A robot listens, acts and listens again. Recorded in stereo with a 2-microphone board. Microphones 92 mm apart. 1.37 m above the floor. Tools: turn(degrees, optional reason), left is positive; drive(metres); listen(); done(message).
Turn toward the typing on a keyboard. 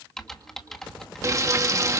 turn(degrees=30)
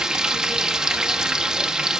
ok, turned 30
listen()
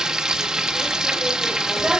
listen()
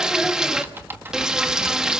turn(degrees=-25, reason="So it is at 25° right.")
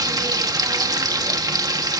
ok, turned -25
listen()
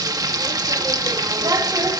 listen()
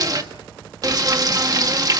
done("I heard typing on a keyboard from this way, but can't make it out now.")